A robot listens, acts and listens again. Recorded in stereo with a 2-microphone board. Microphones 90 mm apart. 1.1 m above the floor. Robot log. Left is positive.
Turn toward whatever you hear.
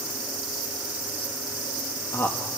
note: The man speaking: about 30° left or 150° left.
cmd yaw +30
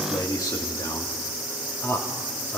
note: The man speaking: about 30° left or 150° left.
cmd yaw +30
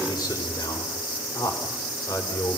note: So it is at 130° left.
cmd yaw +130
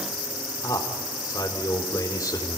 note: The man speaking is now 40° left.
cmd yaw +40
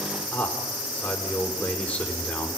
note: The man speaking is now 15° left.
cmd yaw +15
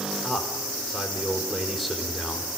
end: Found it: a man speaking, straight ahead.